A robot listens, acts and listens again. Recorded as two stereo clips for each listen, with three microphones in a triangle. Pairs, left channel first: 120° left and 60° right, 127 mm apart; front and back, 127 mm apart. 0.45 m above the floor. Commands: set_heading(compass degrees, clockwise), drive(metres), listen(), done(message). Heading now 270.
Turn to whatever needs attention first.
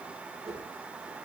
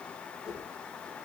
listen()
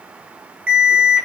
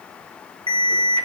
set_heading(50)
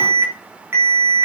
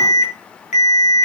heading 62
set_heading(52)
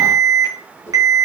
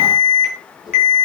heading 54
done("Facing the alarm, 2 to 4 m away.")